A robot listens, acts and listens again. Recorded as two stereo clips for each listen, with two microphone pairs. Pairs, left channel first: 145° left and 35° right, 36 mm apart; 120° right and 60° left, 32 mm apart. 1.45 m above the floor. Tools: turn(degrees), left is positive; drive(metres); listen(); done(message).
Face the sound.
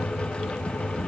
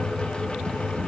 listen()
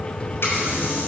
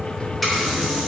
turn(degrees=145)
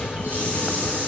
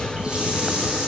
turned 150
done("Found it: a running tap, straight ahead, over 4 m away.")